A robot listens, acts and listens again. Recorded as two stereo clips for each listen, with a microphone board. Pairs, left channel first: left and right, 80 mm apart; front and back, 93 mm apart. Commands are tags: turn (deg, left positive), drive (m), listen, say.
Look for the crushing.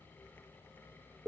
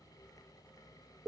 <listen/>
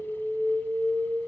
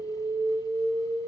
<listen/>
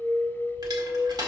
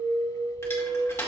<turn deg="-60"/>
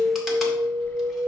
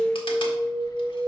<listen/>
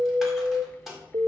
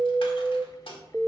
<say>Found it: crushing, straight ahead.</say>